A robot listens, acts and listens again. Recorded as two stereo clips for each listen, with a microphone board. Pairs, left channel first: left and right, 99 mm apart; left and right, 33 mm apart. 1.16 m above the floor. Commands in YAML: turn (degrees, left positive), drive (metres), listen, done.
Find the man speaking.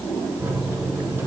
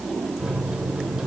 listen: true
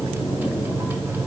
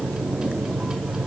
listen: true
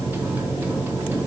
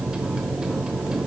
done: "I can't make out a man speaking to turn to."